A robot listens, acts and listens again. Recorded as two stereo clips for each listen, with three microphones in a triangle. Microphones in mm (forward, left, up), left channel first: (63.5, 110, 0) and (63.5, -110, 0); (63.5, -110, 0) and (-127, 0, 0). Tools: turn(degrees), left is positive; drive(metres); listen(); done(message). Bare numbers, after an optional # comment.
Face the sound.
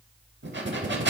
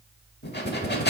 # The breathing: 65° right.
turn(-65)
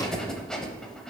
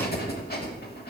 done("Facing the breathing, under 1 m away.")